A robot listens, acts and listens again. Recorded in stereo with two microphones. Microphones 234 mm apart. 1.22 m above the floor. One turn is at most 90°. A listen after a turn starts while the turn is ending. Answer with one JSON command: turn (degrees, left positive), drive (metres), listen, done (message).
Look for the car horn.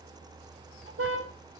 {"turn": -65}
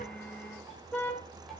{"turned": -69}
{"done": "Facing the car horn, 2 to 4 m away."}